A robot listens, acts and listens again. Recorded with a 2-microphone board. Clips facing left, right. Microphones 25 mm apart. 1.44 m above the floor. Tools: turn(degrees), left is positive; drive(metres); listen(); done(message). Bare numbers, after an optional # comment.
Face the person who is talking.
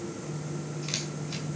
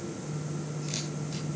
listen()
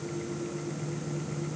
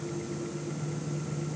listen()
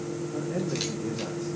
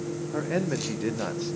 # The man speaking: about 50° right or 130° right.
turn(-50)
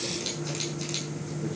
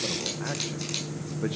listen()
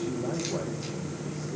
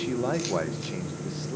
# So it is at 85° right.
turn(-85)
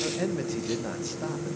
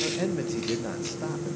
done("Found it: a man speaking, straight ahead.")